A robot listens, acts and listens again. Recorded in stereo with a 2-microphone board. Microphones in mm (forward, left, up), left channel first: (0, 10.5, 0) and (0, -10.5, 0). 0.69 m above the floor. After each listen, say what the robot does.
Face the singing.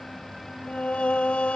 Turn 90° left.
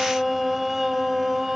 Turn 20° right.
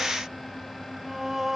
Turn 20° right.
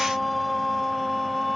Found it: singing, straight ahead.